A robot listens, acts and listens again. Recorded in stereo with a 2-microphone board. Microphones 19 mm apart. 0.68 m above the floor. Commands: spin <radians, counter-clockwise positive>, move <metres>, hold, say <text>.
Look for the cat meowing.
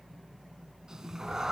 spin -0.52
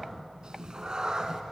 spin -0.61
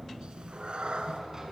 spin -2.18
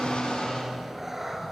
spin -0.35
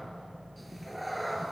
say Found it: a cat meowing, straight ahead, 2 to 4 m away.